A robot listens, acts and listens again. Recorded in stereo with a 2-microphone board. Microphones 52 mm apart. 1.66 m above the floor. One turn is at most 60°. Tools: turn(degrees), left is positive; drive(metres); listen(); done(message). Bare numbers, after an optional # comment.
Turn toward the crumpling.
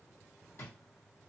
listen()
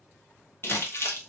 # The crumpling: about 45° left or 135° left.
turn(45)
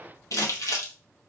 # So it is at 85° left.
turn(60)
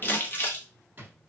# The crumpling is now 40° left.
turn(40)
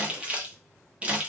# The crumpling is now 25° right.
turn(-25)
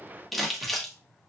done("Facing the crumpling, 1 to 2 m away.")